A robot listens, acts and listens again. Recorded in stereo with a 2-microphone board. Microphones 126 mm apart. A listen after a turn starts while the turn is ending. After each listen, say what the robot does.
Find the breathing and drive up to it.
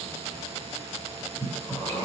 Turn 20° left.
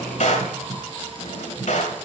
Drive 1.0 m forward.
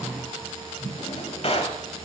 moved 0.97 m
Turn 10° left.
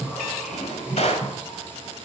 Drive 1.0 m forward.
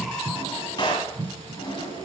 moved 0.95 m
Drive 1.0 m forward.
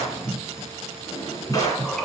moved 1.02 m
Drive 1.0 m forward.
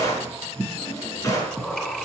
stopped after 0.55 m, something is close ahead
Turn 10° left.
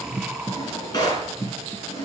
I am next to the breathing.